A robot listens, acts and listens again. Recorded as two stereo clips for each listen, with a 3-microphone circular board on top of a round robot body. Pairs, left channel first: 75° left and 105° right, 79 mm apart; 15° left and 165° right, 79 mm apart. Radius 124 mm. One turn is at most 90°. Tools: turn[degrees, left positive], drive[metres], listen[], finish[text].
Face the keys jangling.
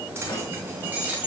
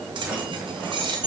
Thought: The keys jangling: straight behind.
Action: turn[90]
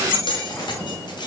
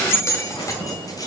Thought: The keys jangling is now 55° left.
Action: turn[55]
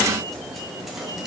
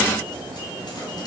Action: listen[]
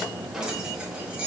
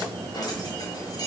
Action: listen[]
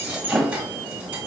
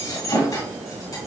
Thought: The keys jangling is now 35° right.
Action: turn[-35]
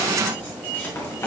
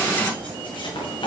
Action: listen[]
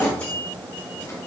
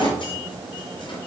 Action: listen[]
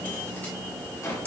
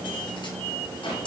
Action: finish[I heard keys jangling from this way, but can't make it out now.]